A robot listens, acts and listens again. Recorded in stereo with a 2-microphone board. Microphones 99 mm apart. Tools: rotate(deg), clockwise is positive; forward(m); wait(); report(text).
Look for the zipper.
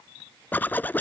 rotate(-20)
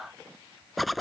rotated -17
report("Facing the zipper.")